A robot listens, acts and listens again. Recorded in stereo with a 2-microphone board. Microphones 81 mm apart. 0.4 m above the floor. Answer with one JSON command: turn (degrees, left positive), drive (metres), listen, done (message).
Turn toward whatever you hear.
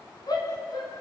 {"turn": 55}
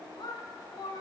{"turn": 70}
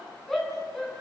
{"done": "Found it: a shout, straight ahead, over 4 m away."}